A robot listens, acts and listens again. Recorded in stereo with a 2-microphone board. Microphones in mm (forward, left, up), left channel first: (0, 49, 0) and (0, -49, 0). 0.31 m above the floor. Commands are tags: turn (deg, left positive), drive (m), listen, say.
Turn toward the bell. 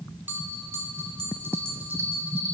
<turn deg="-20"/>
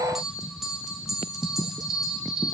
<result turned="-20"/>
<say>Found it: a bell, straight ahead, 1 to 2 m away.</say>